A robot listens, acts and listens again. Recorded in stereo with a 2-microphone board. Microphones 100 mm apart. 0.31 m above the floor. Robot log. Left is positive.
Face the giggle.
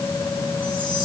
cmd idle
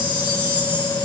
cmd idle
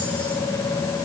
end: I can't make out a giggle, only a chime.